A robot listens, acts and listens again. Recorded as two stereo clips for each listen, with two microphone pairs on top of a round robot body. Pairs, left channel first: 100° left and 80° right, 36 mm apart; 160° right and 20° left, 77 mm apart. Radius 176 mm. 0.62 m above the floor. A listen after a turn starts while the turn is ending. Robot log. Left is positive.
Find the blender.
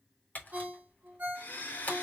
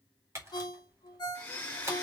note: The blender: 135° left.
cmd yaw +135
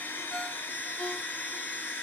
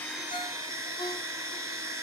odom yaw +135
note: The blender is now 65° left.
cmd yaw +65
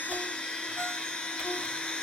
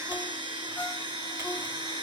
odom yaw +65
note: The blender is now 30° left.
cmd yaw +30
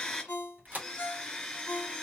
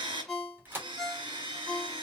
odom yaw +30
note: The blender is now 20° left.
cmd yaw +20
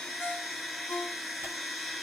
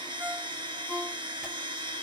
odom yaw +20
end: Found it: a blender, straight ahead, 2 to 4 m away.